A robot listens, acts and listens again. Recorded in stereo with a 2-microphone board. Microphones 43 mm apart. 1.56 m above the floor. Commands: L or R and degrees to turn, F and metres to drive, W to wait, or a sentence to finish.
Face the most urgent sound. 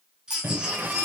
R15
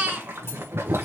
R150
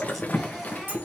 W
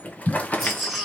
Facing the baby crying.